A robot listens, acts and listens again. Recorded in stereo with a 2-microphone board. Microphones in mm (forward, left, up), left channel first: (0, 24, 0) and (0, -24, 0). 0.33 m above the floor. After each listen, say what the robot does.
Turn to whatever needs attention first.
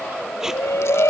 Turn 75° left.
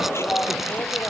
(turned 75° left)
Turn 30° left.
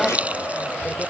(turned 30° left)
Found it: a shout, straight ahead.